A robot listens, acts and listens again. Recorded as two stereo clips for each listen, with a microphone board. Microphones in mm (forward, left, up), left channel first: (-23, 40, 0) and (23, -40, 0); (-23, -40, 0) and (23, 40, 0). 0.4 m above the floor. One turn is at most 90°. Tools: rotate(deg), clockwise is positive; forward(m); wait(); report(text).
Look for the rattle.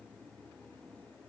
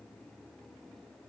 wait()
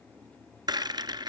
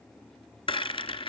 rotate(90)
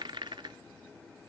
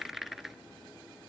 rotate(25)
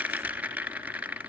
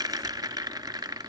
rotate(-15)
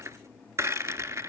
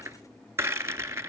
report("Facing the rattle.")